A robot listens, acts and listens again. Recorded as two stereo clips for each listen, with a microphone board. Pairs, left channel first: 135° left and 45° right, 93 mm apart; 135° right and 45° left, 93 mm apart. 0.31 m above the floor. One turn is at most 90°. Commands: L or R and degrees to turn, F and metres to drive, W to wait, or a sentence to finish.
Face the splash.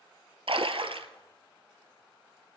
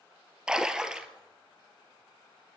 R35
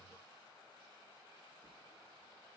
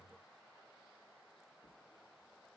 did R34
I heard a splash from this way, but can't make it out now.